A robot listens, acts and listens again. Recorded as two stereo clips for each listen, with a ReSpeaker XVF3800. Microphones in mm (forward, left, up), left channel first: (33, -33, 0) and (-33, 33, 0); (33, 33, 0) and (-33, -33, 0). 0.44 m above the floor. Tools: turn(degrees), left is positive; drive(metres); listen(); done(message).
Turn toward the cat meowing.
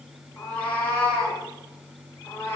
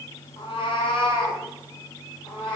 turn(degrees=15)
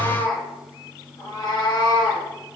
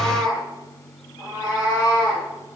done("Found it: a cat meowing, straight ahead.")